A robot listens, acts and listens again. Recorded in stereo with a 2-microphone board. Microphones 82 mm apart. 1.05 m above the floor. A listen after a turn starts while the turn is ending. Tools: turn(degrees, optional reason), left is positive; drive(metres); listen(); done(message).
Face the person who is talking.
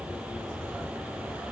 listen()
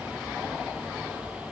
listen()
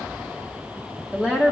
turn(degrees=-30)
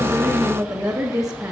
turn(degrees=-135, reason="So it is at 135° right.")
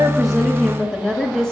turn(degrees=10, reason="The woman speaking is now 10° left.")
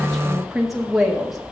done("Found it: a woman speaking, straight ahead.")